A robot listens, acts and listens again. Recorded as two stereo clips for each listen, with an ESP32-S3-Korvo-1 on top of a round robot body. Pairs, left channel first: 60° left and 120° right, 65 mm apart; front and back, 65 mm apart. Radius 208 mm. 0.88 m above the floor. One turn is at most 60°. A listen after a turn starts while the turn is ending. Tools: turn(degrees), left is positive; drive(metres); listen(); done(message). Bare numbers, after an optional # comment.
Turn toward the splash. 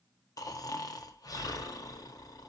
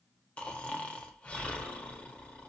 listen()
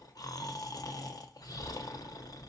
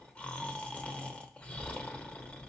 listen()
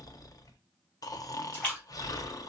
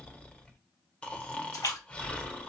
done("Found it: a splash, straight ahead.")